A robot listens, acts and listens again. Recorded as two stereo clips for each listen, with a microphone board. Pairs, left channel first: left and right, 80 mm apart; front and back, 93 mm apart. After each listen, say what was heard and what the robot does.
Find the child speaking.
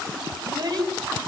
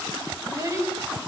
The child speaking: 125° right. Turn 125° right.
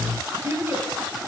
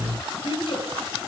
The child speaking is now 25° right. Turn 25° right.
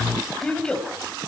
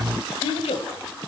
The child speaking is now 10° left. Turn 10° left.
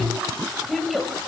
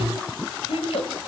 Found it: a child speaking, straight ahead.